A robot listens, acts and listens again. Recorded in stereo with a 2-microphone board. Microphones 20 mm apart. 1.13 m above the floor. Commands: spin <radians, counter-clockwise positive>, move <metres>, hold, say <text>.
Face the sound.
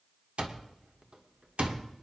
spin -1.31
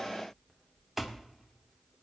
spin -0.17
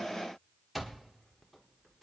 say Facing the alarm clock.